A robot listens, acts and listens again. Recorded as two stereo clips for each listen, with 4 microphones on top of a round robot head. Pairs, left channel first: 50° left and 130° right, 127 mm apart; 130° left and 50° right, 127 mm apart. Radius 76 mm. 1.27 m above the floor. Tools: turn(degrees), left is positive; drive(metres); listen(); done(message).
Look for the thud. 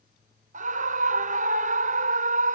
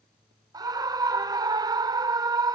listen()
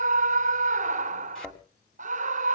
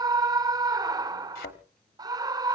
turn(degrees=135)
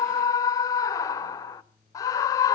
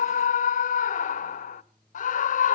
done("I heard a thud from this way, but can't make it out now.")